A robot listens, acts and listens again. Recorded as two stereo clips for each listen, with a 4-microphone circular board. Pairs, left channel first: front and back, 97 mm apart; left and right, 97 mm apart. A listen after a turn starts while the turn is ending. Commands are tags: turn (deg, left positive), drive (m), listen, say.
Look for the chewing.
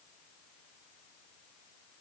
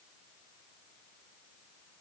<listen/>
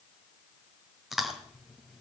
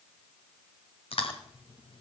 <turn deg="90"/>
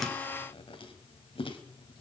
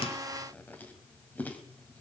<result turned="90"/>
<turn deg="20"/>
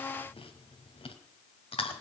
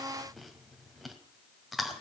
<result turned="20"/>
<say>Facing the chewing, 1 to 2 m away.</say>